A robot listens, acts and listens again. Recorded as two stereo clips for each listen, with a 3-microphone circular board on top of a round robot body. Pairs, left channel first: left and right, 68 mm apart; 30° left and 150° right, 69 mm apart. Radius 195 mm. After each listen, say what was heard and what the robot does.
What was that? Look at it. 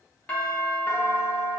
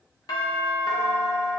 The doorbell: 25° left. Turn 25° left.
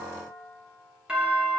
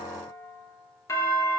The doorbell is now 15° right. Turn 15° right.
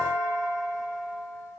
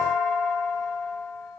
Found it: a doorbell, straight ahead.